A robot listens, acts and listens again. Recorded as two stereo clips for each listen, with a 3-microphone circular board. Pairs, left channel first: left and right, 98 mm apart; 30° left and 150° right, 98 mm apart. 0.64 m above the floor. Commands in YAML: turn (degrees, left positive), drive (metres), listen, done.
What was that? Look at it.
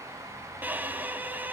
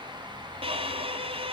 turn: -160
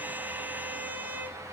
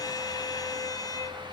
turn: -20
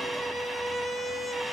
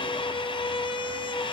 done: "Found it: a violin, straight ahead, 1 to 2 m away."